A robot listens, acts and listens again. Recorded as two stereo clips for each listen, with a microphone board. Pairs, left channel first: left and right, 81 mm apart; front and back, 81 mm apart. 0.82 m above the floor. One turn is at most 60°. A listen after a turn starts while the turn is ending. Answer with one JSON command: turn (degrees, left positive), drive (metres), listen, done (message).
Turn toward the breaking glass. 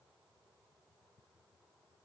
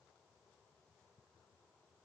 {"listen": true}
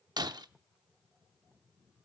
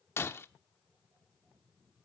{"turn": -60}
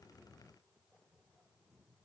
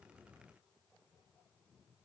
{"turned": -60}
{"done": "Facing where the breaking glass came from. I can't hear it now."}